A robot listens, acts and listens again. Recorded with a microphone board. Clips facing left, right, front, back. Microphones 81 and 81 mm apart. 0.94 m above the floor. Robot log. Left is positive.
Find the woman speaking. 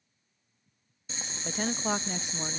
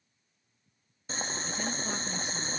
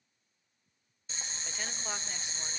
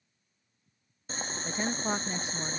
note: The woman speaking: 120° left.
cmd yaw +120
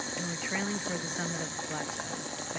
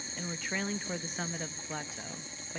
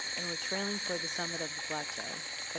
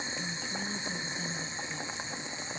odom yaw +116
end: Facing the woman speaking, under 1 m away.